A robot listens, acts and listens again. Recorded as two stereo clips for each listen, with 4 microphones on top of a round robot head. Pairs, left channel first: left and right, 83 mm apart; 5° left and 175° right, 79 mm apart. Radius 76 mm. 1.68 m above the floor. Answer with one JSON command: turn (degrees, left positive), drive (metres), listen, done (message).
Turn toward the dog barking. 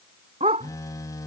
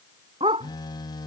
{"turn": -130}
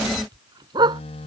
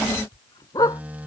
{"turn": -55}
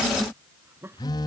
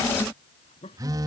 {"listen": true}
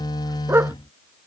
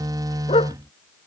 {"turn": -30}
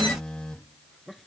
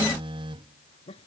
{"listen": true}
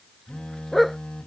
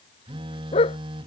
{"done": "Facing the dog barking."}